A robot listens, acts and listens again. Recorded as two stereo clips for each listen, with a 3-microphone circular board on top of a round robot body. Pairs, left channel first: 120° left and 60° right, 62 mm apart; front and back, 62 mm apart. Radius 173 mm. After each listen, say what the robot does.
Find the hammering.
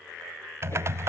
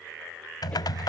Keep listening.
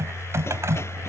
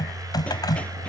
Keep listening.
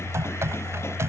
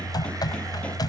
I can't make out hammering to turn to.